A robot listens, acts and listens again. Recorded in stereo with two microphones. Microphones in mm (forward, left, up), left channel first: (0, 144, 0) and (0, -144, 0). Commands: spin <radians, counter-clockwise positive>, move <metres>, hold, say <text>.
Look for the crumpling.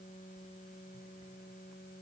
hold
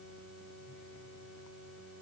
hold
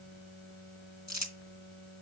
spin 1.22
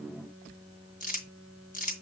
spin 0.52
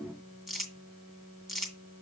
say Found it: crumpling, straight ahead.